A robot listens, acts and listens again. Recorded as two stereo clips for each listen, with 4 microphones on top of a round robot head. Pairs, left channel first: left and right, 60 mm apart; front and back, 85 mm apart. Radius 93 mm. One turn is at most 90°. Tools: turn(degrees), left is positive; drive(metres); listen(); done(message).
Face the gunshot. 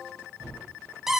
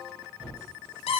turn(degrees=-90)
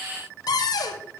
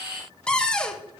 turn(degrees=-10)
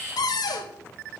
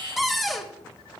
done("Facing where the gunshot came from. I can't hear it now.")